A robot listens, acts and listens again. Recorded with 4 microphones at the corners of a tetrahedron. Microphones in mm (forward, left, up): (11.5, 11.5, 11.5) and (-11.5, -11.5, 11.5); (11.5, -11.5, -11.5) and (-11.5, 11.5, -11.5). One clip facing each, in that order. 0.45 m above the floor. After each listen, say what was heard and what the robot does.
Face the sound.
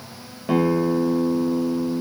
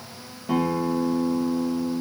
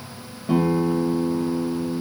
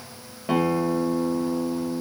The guitar: 85° left. Turn 85° left.
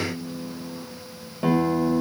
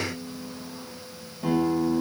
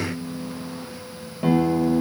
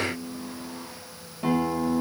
The guitar is now 25° left. Turn 25° left.
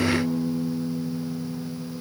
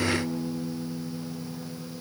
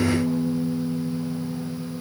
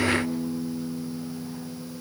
The guitar is now 10° right. Turn 10° right.
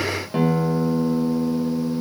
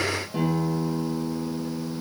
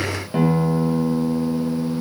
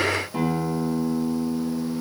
Facing the guitar.